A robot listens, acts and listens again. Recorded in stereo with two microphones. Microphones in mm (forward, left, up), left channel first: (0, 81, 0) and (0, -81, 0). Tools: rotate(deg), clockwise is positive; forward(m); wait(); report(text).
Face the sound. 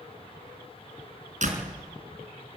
rotate(55)
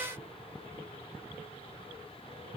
wait()
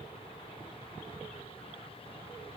report("I heard a door slam, but can't make it out now. It was about straight ahead or 70° right.")